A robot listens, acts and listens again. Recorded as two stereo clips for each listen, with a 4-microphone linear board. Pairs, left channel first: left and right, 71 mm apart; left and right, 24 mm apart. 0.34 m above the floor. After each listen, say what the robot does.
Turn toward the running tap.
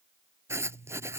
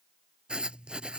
Keep listening.
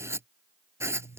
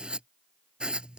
Keep listening.
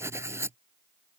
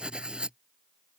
I can't make out a running tap to turn to.